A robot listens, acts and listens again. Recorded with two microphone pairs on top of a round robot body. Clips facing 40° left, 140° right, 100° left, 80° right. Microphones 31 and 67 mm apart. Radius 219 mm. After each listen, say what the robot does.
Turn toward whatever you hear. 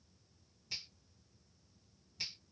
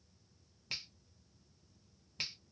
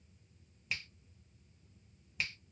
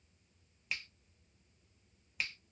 Turn 170° right.
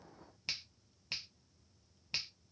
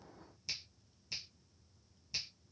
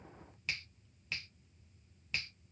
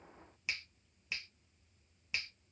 Facing the finger snap.